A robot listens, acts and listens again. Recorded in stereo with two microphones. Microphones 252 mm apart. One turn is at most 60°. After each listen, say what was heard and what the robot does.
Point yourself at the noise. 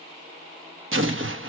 The explosion: about 50° right or 130° right. Turn 50° right.
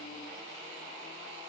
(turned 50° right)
Keep listening.
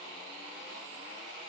I heard an explosion, but can't make it out now. It was about straight ahead or 80° right.